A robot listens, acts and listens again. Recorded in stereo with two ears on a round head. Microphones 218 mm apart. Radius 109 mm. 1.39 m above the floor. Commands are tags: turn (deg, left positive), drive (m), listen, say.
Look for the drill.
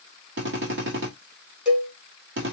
<turn deg="-50"/>
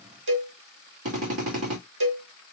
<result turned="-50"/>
<turn deg="-75"/>
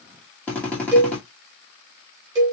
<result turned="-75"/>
<say>Facing the drill.</say>